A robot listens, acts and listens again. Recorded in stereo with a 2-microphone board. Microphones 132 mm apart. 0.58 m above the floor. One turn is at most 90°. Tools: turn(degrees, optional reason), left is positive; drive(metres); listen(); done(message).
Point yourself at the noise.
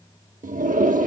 turn(degrees=-90)
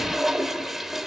done("Facing the toilet flushing, under 1 m away.")